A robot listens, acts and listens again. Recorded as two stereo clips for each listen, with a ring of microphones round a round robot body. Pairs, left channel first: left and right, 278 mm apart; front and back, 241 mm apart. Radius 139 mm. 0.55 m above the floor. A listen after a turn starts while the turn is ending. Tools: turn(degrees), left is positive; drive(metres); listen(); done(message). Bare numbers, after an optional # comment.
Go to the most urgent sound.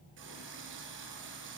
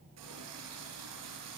listen()
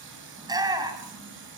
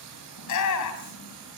# The shout: 15° right.
turn(-15)
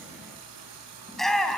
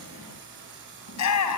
drive(1.0)
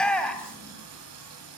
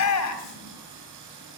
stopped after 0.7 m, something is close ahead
done("Something is in my way. I am facing the shout but have not reached it.")